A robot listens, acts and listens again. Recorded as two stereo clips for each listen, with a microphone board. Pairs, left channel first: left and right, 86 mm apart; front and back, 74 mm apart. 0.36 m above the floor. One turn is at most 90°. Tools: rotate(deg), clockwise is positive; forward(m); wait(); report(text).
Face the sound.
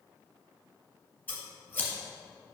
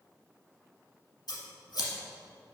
rotate(-20)
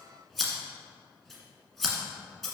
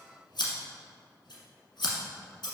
report("Facing the scissors, 1 to 2 m away.")